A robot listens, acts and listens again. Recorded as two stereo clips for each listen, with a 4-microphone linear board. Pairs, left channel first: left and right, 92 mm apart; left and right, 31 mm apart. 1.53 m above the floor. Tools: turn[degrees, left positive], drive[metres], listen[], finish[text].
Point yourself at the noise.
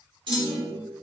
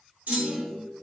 Thought: The clunk: about 70° right or 110° right.
Action: turn[-70]
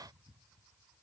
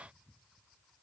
Action: listen[]
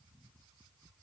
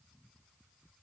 Action: finish[I heard a clunk, but can't make it out now. It was about straight ahead or 40° right.]